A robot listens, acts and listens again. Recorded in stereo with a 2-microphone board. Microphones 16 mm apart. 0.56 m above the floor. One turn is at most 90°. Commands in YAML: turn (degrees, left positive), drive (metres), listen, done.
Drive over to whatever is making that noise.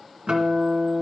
turn: -90
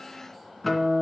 drive: 1.0
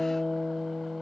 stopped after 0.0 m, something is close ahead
done: "Blocked. The guitar is further on, straight ahead."